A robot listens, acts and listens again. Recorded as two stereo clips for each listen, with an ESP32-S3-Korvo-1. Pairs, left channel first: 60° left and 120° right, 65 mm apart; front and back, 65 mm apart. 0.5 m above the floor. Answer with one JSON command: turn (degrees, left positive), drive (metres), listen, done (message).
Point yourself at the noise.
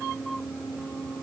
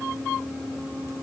{"listen": true}
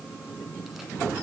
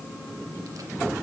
{"listen": true}
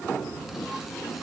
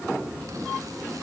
{"done": "I can't make out anything."}